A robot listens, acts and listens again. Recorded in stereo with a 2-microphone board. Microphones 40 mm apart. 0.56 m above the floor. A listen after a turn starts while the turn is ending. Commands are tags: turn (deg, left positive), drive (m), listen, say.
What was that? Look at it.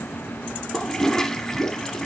<turn deg="30"/>
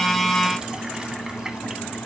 <listen/>
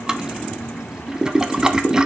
<turn deg="-20"/>
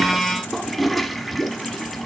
<say>Facing the toilet flushing.</say>